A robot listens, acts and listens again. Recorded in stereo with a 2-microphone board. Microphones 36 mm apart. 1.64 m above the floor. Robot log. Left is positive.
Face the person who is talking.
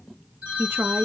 cmd yaw -90
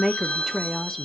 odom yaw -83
end: Found it: a woman speaking, straight ahead.